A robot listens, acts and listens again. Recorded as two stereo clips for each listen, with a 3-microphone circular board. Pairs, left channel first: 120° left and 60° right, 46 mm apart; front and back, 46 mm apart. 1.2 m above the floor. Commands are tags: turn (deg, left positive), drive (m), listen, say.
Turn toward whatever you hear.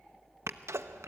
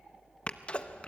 <turn deg="-65"/>
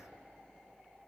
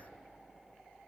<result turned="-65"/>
<say>I heard a sneeze from this way, but can't make it out now.</say>